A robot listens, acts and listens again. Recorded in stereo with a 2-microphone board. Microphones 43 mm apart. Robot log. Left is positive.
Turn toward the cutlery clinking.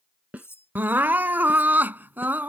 cmd yaw +90
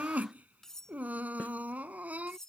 note: So it is at 10° left.
cmd yaw +10
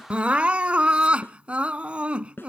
cmd idle
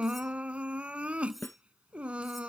end: Facing the cutlery clinking.